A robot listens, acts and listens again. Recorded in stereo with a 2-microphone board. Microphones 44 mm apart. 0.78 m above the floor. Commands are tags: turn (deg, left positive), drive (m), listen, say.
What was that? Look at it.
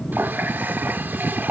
<turn deg="-50"/>
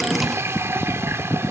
<turn deg="-80"/>
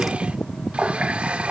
<turn deg="-25"/>
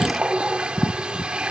<turn deg="-20"/>
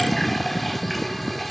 <say>Found it: a running tap, straight ahead.</say>